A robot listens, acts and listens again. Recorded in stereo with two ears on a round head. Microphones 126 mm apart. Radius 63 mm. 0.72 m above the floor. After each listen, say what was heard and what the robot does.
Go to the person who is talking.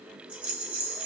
Keep listening.
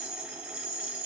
Keep listening.
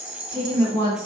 The woman speaking: about 30° left or 150° left. Turn 30° left.
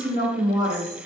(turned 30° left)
So it is at 120° left. Turn 120° left.
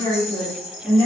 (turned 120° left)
The woman speaking is now 35° left. Turn 35° left.
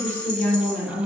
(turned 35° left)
The woman speaking is now 15° left. Turn 15° left.
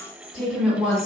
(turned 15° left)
Drive 1.0 m forward.
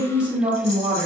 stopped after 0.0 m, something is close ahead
Blocked. The woman speaking is further on, straight ahead.